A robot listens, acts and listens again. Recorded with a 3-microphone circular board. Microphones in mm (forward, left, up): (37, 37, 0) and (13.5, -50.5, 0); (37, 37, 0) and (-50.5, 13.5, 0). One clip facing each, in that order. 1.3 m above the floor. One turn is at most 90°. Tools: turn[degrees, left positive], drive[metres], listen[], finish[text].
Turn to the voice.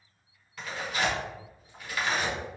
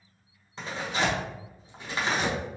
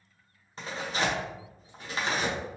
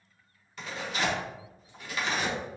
Action: listen[]
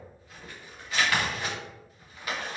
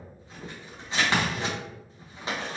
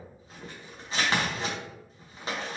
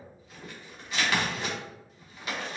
Action: listen[]
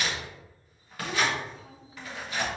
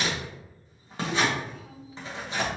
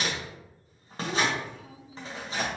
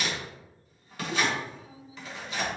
Thought: The child speaking: 15° left.
Action: turn[15]
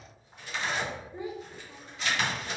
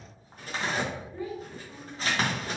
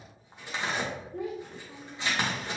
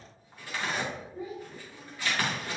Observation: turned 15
Action: finish[Found it: a child speaking, straight ahead, under 1 m away.]